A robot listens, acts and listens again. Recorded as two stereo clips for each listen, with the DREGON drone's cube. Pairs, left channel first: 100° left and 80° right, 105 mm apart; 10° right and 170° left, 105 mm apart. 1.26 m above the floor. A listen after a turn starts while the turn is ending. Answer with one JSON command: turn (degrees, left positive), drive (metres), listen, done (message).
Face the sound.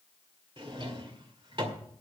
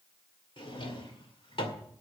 {"turn": -40}
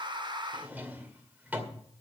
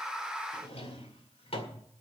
{"done": "Facing the drawer, 2 to 4 m away."}